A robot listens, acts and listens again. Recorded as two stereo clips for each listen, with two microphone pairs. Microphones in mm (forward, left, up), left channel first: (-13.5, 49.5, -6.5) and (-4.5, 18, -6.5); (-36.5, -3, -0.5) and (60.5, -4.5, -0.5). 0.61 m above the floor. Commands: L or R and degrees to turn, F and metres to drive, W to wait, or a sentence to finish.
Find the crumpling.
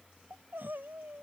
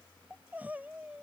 W
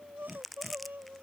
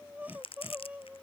R165
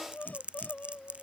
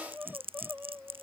R20
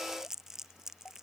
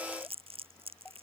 Facing the crumpling.